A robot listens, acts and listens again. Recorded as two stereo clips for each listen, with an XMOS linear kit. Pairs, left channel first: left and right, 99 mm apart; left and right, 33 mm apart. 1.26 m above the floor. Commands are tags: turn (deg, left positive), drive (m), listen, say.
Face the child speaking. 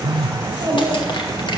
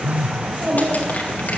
<turn deg="-55"/>
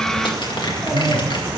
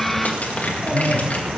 <listen/>
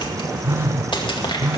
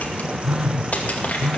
<listen/>
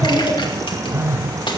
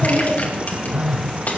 <say>Facing the child speaking, over 4 m away.</say>